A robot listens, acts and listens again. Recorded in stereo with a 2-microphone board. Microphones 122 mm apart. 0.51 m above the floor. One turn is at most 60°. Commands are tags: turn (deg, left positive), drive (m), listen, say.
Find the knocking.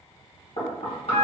<turn deg="60"/>
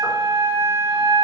<listen/>
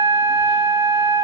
<listen/>
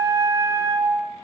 <say>I heard knocking, but can't make it out now. It was about straight ahead or 60° left.</say>